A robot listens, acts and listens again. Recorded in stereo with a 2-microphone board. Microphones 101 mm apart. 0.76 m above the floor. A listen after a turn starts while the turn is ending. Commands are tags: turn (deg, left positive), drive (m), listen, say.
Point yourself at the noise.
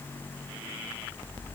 <listen/>
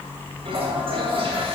<turn deg="-60"/>
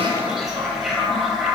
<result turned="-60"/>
<say>Facing the toilet flushing.</say>